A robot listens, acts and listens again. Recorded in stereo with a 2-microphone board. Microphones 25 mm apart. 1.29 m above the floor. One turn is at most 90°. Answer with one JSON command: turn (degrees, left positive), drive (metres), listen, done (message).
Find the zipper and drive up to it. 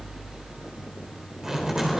{"turn": -20}
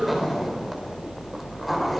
{"drive": 1.0}
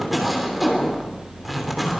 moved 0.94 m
{"drive": 1.0}
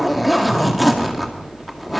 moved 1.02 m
{"drive": 1.0}
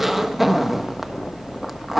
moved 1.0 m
{"turn": -10}
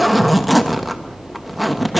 {"drive": 1.0}
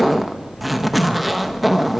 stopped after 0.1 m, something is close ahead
{"done": "I am next to the zipper."}